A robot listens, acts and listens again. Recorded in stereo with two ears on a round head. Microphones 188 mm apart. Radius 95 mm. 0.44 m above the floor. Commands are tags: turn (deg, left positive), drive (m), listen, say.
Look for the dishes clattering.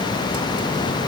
<listen/>
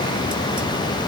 <listen/>
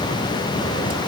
<say>I can't make out dishes clattering to turn to.</say>